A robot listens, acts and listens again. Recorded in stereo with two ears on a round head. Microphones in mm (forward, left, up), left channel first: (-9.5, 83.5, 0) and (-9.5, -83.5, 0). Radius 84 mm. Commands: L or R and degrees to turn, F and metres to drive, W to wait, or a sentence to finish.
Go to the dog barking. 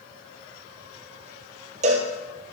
W
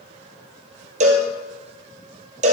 W
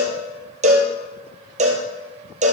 I can't make out a dog barking to turn to.